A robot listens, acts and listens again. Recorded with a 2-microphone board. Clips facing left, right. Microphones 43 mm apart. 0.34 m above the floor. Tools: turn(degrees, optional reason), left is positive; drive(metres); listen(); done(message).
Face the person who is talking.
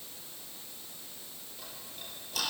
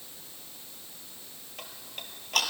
listen()
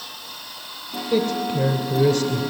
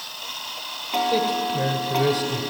turn(degrees=-30)
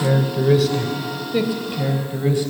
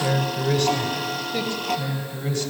turn(degrees=15, reason="So it is at 15° left.")
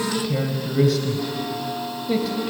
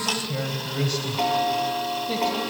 done("Found it: a man speaking, straight ahead, 2 to 4 m away.")